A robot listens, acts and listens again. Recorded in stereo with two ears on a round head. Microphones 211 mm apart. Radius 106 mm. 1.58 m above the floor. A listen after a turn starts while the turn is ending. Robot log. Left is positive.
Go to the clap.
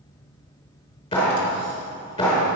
note: The clap: about 20° left or 160° left.
cmd yaw +20
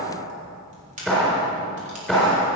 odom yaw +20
cmd fwd 1.0
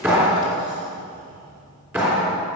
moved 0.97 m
note: The clap is now 10° right.
cmd yaw -10
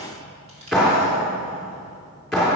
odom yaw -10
cmd fwd 1.0
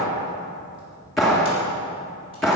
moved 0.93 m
cmd fwd 1.0
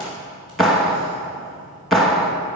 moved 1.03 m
cmd fwd 1.0
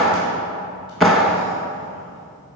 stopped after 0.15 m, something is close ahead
end: Arrived at the clap, straight ahead.